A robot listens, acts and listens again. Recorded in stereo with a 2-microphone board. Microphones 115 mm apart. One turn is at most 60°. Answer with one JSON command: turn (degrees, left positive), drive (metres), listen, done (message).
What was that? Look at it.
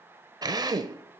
{"turn": -35}
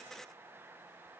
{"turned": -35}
{"listen": true}
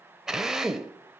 {"done": "Facing the drill, under 1 m away."}